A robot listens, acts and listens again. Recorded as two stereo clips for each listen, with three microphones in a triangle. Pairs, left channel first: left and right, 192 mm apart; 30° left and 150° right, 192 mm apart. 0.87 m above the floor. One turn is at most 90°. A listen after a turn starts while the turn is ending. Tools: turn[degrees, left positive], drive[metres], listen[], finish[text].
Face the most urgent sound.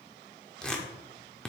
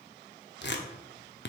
Action: listen[]
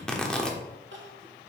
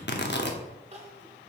Thought: The crying: 95° right.
Action: turn[-90]
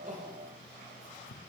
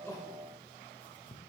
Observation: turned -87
Action: listen[]
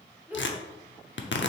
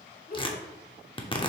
Thought: The crying is now 10° right.
Action: turn[-10]
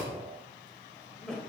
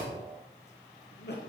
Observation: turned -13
Action: finish[Facing the crying.]